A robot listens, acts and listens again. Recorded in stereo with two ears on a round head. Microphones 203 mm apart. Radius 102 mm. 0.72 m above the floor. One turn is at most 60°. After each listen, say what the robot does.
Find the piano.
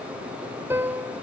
Turn 30° right.
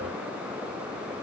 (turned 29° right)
Keep listening.
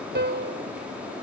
Turn 60° right.
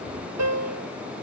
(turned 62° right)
Turn 60° right.
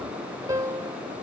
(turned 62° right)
Turn 15° right.
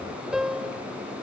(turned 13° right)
Facing the piano.